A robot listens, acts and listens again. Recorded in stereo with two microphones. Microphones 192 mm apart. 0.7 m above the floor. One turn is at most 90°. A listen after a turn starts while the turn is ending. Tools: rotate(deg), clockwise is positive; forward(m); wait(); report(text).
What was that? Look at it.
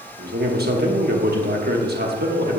rotate(55)
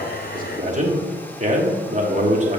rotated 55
rotate(50)
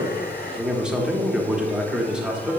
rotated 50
report("Found it: a man speaking, straight ahead, 1 to 2 m away.")